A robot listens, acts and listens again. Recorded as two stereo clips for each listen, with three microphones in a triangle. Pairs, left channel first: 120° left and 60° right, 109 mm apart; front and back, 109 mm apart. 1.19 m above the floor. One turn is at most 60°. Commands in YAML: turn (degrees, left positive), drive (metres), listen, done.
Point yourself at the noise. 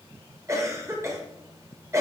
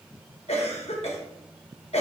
done: "Facing the cough."